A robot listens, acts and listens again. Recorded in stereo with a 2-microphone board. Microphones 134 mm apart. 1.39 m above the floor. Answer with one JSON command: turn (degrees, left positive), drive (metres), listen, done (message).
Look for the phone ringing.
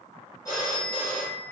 {"turn": 25}
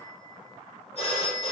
{"turn": 130}
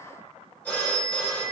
{"turn": 10}
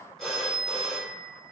{"done": "Facing the phone ringing, 1 to 2 m away."}